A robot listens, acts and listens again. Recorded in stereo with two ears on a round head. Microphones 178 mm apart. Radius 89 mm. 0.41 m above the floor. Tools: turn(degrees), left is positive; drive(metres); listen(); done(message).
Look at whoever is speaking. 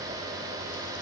listen()
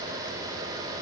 listen()
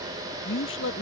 turn(degrees=70)
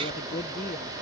listen()
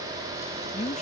turn(degrees=35)
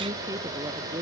listen()
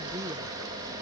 listen()
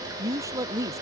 turn(degrees=-15)
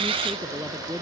done("Found it: a woman speaking, straight ahead.")